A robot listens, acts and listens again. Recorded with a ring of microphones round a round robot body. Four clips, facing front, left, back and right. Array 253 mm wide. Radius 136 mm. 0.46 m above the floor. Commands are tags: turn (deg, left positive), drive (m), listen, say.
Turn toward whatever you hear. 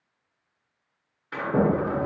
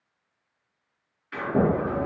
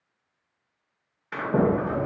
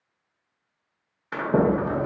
<turn deg="-95"/>
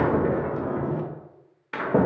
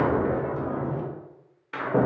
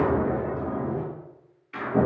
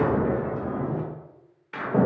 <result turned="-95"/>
<say>Facing the sliding door.</say>